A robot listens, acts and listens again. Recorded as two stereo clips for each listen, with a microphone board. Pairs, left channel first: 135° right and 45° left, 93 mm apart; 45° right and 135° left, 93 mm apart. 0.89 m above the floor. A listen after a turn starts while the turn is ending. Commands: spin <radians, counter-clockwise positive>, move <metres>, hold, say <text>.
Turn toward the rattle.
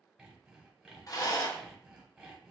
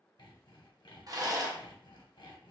spin 3.14
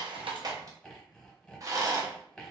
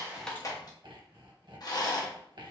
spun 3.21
say Found it: a rattle, straight ahead.